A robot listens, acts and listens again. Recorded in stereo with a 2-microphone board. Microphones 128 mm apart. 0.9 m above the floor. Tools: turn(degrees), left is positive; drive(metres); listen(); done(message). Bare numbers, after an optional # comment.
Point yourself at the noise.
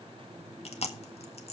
# The chewing: about 55° left or 125° left.
turn(55)
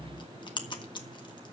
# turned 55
# So it is at 45° left.
turn(45)
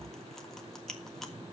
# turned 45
done("Facing the chewing.")